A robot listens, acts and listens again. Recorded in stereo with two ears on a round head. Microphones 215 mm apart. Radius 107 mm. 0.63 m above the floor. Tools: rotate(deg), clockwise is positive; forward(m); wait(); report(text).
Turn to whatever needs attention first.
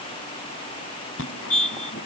rotate(-55)
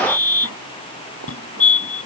rotate(-65)
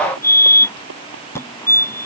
rotate(-10)
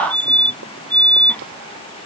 report("Found it: a fire alarm, straight ahead.")